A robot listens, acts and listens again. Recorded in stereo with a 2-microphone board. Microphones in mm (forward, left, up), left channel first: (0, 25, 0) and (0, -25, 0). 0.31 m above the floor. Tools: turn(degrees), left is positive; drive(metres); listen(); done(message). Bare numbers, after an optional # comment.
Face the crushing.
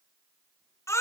listen()
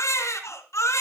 listen()
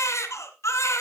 done("I can't make out crushing to turn to.")